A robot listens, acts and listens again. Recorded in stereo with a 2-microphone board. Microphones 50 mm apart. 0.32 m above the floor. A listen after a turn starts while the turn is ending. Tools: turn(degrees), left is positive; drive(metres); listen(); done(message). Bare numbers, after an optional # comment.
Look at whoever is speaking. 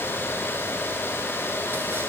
listen()
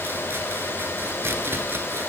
listen()
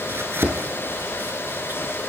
done("I can't make out anyone speaking, only chopping.")